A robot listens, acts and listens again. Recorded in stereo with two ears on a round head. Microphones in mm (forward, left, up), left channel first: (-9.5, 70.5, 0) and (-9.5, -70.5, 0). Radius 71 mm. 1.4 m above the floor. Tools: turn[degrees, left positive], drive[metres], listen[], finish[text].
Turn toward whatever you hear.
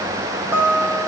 Action: turn[-30]
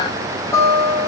Thought: So it is at 15° left.
Action: turn[15]
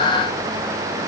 Action: listen[]
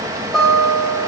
Action: finish[Found it: a guitar, straight ahead, over 4 m away.]